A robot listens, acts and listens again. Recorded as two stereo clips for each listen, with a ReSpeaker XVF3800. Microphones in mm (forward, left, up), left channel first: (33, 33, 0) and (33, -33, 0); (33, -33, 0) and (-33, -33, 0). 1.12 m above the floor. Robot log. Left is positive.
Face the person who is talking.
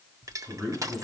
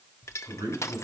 note: The man speaking: straight behind.
cmd yaw +180
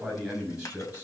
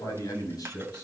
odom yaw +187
note: The man speaking is now 15° right.
cmd yaw -15
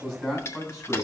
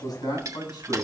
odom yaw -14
end: Found it: a man speaking, straight ahead.